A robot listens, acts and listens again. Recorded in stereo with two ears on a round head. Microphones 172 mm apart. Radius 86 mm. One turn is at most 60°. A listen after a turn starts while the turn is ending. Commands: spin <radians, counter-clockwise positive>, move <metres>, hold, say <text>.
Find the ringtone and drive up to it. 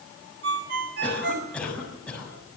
spin -1.05
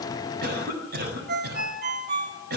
spin -0.96
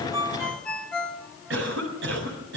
move 1.0
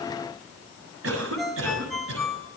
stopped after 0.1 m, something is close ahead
say Something is in my way. I am facing the ringtone but have not reached it.